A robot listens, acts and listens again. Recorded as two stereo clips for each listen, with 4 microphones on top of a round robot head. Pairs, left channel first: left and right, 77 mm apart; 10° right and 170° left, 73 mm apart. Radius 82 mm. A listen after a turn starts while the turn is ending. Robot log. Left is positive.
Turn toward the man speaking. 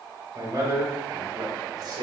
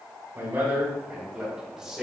note: The man speaking: 105° right.
cmd yaw -105
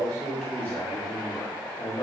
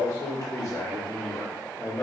note: The man speaking is now 60° left.
cmd yaw +60
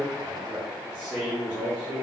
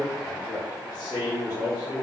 note: The man speaking is now 10° left.
cmd yaw +10
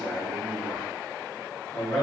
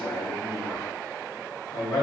note: The man speaking is now 10° left.
cmd yaw +10
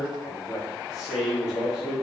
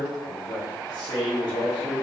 end: Facing the man speaking, 2 to 4 m away.